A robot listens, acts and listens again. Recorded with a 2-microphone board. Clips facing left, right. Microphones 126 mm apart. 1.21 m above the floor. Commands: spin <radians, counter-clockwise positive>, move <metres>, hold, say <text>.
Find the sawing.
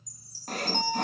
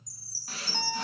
spin 0.87
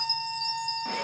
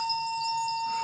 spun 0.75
hold
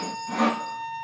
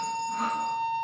spin 1.48
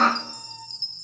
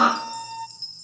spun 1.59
spin -0.17
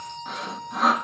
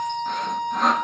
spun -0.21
say Facing the sawing.